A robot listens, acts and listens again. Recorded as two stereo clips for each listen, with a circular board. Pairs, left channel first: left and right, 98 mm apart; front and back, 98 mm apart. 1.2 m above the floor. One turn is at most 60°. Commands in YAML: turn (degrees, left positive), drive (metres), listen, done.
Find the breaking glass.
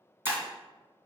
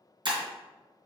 turn: -60
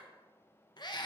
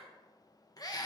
turn: -60
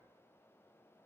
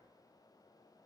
turn: -35
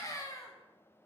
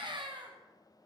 done: "Facing where the breaking glass came from. I can't hear it now."